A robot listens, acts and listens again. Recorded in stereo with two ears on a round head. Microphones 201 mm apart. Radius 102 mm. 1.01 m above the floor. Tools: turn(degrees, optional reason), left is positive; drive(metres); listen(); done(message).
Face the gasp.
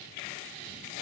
listen()
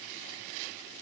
listen()
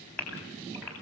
turn(degrees=30)
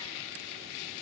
listen()
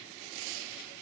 done("I heard a gasp, but can't make it out now. It was about 25° right or 145° left.")